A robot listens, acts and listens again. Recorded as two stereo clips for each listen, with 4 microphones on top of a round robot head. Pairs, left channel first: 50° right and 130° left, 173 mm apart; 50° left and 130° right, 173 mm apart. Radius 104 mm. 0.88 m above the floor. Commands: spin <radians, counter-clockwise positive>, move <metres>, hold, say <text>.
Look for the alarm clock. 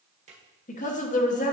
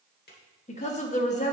hold
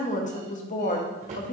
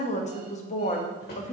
hold
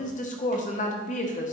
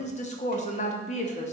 say I can't make out an alarm clock to turn to.